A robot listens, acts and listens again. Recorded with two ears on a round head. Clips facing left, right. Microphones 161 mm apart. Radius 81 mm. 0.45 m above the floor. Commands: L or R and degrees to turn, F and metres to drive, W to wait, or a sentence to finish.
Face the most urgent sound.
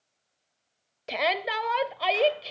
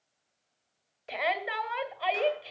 L50
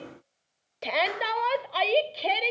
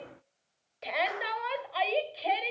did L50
L70
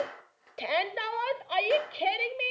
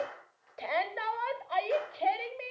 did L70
L45
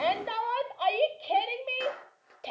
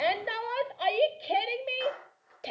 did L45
R20
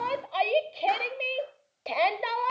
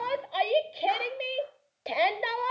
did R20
R10
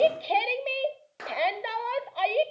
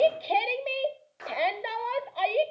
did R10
Found it: a shout, straight ahead.